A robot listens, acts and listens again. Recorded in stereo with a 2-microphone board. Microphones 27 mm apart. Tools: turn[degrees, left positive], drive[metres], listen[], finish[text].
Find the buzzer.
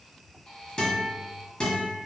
Thought: The buzzer: about 35° left or 145° left.
Action: turn[35]
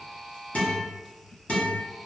Action: finish[Facing the buzzer, under 1 m away.]